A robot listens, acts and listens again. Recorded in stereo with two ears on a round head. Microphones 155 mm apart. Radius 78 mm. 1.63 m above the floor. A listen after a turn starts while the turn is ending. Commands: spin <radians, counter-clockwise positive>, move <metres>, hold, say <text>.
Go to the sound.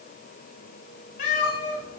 spin 0.79
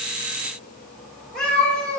move 1.0
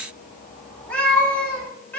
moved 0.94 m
spin 0.17
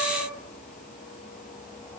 hold
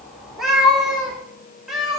move 1.0
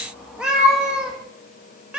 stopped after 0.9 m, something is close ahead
say I am next to the cat meowing.